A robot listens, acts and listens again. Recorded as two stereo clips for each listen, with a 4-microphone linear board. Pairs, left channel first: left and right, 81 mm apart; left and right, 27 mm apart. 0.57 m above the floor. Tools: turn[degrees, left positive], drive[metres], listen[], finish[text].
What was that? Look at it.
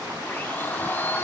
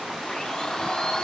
Thought: The blender: about 25° left or 155° left.
Action: turn[25]
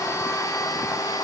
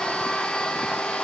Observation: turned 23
Thought: So it is at 130° left.
Action: turn[130]
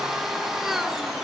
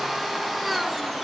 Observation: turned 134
Action: finish[Facing the blender, under 1 m away.]